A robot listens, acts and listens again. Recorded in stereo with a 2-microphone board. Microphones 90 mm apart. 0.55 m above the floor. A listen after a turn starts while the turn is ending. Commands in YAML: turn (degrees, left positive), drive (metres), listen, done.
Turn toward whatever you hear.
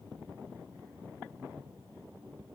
listen: true
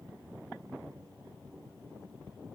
listen: true
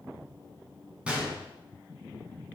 turn: -30
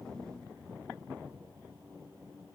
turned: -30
listen: true
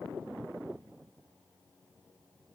done: "I heard a gunshot, but can't make it out now. It was about 15° left or 135° right."